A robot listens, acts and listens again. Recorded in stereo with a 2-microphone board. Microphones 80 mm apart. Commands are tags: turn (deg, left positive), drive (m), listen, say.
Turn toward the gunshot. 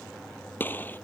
<turn deg="20"/>
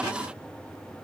<listen/>
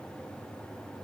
<say>I heard a gunshot, but can't make it out now. It was about straight ahead or 140° left.</say>